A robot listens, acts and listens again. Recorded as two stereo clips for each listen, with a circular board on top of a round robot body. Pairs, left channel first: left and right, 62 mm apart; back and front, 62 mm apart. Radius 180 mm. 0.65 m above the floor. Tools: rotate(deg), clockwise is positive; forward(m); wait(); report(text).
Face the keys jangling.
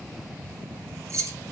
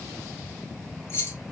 rotate(130)
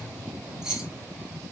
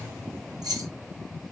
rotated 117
rotate(10)
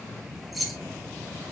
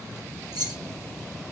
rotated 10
report("Facing the keys jangling, 1 to 2 m away.")